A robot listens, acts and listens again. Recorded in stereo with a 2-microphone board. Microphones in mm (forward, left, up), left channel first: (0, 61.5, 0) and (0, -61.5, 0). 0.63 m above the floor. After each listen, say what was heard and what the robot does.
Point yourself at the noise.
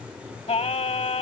The singing: about 60° left or 120° left. Turn 60° left.
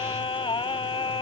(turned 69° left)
So it is at 50° left. Turn 50° left.
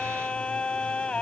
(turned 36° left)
The singing is now 10° left. Turn 10° left.
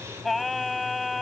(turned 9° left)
Facing the singing.